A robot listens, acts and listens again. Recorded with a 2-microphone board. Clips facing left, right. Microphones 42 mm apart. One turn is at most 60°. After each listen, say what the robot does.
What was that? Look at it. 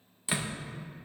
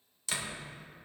Turn 20° left.
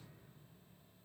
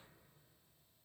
Keep listening.
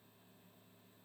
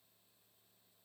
I heard a door slam, but can't make it out now. It was about straight ahead or 140° left.